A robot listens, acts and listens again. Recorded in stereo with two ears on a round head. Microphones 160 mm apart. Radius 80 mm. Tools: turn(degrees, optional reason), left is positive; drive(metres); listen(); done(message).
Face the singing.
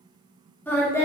turn(degrees=30)
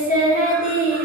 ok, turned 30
turn(degrees=130, reason="So it is at 130° left.")
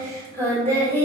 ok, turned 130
turn(degrees=10, reason="The singing is now 10° left.")
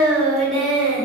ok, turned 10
done("Found it: singing, straight ahead, 2 to 4 m away.")